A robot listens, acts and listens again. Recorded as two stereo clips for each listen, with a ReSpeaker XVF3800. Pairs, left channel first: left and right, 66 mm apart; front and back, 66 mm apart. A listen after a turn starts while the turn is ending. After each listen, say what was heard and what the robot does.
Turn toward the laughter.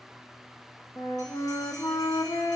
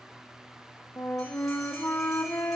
Keep listening.
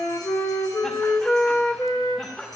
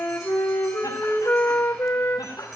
The laughter: 25° left. Turn 25° left.
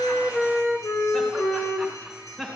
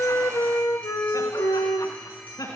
The laughter is now 10° left. Turn 10° left.
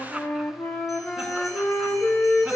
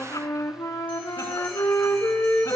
Keep listening.
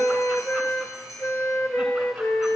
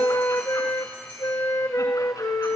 Keep listening.
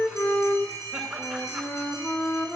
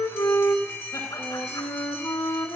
Facing the laughter, over 4 m away.